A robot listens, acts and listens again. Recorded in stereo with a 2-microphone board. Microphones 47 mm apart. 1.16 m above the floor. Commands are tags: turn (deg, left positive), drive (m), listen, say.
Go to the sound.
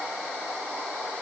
<listen/>
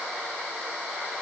<listen/>
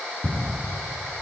<turn deg="25"/>
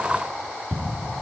<drive m="1.0"/>
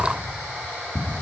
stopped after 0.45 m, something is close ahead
<say>Blocked. The ticking is further on, straight ahead.</say>